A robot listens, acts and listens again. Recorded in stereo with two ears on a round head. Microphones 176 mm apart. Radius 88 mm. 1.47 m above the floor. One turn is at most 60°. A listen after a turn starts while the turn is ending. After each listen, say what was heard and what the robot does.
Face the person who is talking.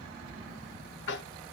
Keep listening.
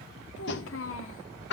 The child speaking: about 70° left or 110° left. Turn 60° left.
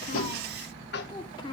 So it is at 25° left. Turn 25° left.
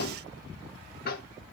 Keep listening.
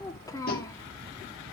The child speaking is now 20° left. Turn 20° left.
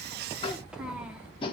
Found it: a child speaking, straight ahead, 2 to 4 m away.